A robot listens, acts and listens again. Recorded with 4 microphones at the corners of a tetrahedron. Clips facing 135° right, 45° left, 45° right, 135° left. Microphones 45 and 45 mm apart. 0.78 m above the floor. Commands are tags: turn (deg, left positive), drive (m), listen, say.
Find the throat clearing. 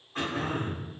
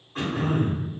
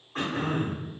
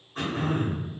<turn deg="-45"/>
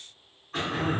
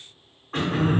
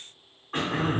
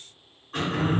<turn deg="10"/>
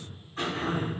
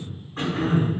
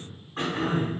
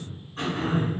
<say>Facing the throat clearing, under 1 m away.</say>